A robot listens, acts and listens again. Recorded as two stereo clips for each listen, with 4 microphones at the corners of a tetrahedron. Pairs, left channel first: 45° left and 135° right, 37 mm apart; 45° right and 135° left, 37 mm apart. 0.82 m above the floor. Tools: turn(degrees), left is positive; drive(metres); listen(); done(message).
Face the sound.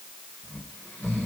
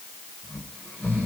turn(degrees=-30)
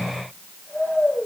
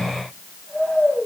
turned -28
done("Facing the snoring.")